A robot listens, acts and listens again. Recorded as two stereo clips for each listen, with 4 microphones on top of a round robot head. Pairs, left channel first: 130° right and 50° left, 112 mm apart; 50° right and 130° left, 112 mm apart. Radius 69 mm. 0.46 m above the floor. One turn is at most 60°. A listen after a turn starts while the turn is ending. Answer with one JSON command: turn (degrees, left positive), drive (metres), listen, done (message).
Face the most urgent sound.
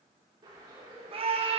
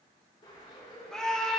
{"turn": 35}
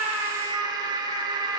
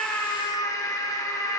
{"done": "Found it: a scream, straight ahead."}